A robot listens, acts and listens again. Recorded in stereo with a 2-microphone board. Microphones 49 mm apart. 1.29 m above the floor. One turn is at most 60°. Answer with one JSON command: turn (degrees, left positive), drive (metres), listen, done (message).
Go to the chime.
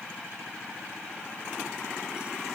{"listen": true}
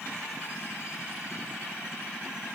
{"listen": true}
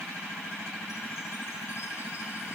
{"done": "I can't make out a chime to turn to."}